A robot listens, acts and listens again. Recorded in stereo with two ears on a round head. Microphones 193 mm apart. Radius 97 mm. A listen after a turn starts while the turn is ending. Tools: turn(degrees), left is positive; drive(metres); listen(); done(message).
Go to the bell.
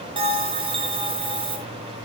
turn(degrees=-25)
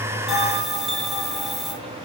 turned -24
drive(metres=1.0)
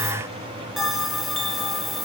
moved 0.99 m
drive(metres=1.0)
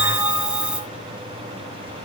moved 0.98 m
drive(metres=1.0)
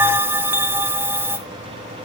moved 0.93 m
turn(degrees=-10)
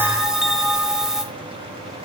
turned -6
drive(metres=1.0)
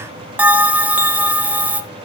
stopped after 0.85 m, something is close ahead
turn(degrees=-10)
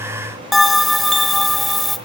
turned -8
done("Arrived at the bell, straight ahead.")